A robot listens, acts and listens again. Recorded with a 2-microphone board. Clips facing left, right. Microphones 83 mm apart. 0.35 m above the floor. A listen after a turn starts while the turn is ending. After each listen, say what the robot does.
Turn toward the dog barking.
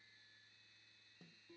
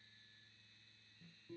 Keep listening.
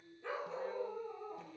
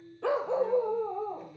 Turn 90° right.
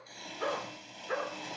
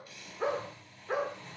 Facing the dog barking.